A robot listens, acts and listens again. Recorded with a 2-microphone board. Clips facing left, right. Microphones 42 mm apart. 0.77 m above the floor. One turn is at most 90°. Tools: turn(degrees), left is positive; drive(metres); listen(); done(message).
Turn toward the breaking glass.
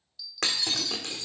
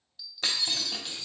turn(degrees=70)
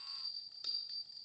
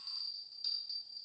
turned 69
listen()
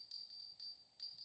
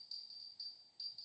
done("I heard breaking glass, but can't make it out now. It was about straight ahead or 40° left.")